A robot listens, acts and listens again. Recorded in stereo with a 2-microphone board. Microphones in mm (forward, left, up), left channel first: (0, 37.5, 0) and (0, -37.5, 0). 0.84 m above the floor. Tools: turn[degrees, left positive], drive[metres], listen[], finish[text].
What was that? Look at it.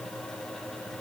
Action: listen[]
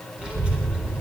Thought: The child speaking: about 15° right or 165° right.
Action: turn[-15]
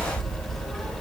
Action: turn[30]
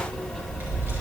Thought: So it is at 30° right.
Action: turn[-30]
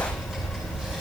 Thought: The child speaking is now 10° right.
Action: turn[-10]
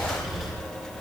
Action: finish[Found it: a child speaking, straight ahead.]